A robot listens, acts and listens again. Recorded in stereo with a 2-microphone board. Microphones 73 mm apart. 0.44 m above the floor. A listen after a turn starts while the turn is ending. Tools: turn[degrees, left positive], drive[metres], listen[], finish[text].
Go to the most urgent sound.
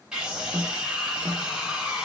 Action: turn[-30]
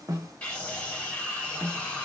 Thought: So it is at 20° left.
Action: turn[20]
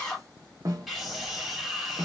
Action: drive[1.0]
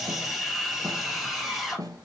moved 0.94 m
Action: drive[1.0]
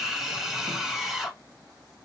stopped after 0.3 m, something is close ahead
Thought: The scream is now 10° right.
Action: turn[-10]
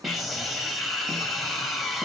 Action: finish[Arrived at the scream, straight ahead.]